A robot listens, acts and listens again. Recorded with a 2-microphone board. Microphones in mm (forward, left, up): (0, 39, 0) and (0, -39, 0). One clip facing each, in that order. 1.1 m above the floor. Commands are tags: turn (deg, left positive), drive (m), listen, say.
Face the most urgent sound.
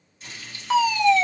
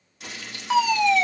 <turn deg="-30"/>
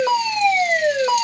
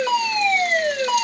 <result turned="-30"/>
<turn deg="20"/>
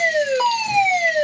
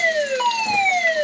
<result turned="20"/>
<turn deg="10"/>
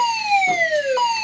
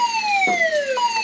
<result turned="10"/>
<say>Facing the fire alarm.</say>